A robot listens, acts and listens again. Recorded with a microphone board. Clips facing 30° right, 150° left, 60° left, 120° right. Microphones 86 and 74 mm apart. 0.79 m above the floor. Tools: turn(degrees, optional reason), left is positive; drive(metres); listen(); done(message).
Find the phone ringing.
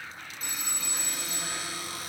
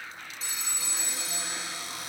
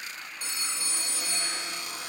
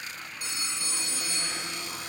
turn(degrees=10, reason="The phone ringing: 10° left.")
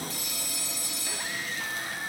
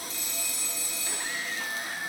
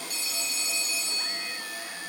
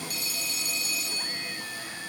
done("Facing the phone ringing.")